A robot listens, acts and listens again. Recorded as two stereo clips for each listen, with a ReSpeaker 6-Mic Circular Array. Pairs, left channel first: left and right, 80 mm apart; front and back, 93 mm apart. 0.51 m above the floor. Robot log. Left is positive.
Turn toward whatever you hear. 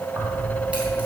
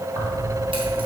note: The keys jangling: 160° right.
cmd yaw -160
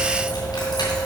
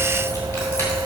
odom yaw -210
note: The keys jangling is now 65° left.
cmd yaw +65
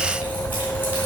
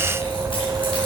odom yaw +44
note: The keys jangling is now 25° left.
cmd yaw +25
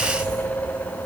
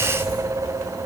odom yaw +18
note: The keys jangling is now 10° left.
cmd yaw +10
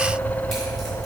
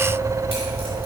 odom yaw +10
end: Facing the keys jangling.